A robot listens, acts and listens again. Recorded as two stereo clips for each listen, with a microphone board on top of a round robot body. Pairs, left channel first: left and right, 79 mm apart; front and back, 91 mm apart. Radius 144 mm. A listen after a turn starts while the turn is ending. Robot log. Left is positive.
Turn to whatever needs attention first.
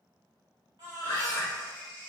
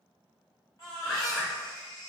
note: The baby crying: 55° right.
cmd yaw -55
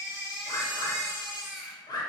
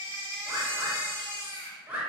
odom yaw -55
note: The baby crying is now 10° right.
cmd yaw -10
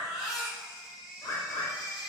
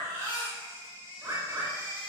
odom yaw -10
end: Facing the baby crying, 1 to 2 m away.